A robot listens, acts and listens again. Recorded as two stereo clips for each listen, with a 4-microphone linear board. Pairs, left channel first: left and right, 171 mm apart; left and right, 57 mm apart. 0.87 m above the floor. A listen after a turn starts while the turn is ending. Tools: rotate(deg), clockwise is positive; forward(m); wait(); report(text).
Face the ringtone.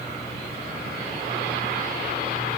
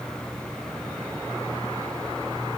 wait()
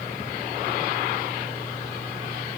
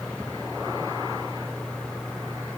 wait()
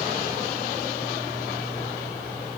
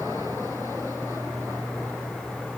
report("I can't make out a ringtone.")